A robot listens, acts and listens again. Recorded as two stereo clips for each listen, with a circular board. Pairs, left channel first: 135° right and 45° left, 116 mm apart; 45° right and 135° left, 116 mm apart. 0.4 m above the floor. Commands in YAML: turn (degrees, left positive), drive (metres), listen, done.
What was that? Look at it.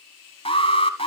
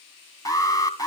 turn: -105
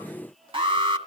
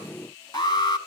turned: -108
done: "Facing the alarm, 2 to 4 m away."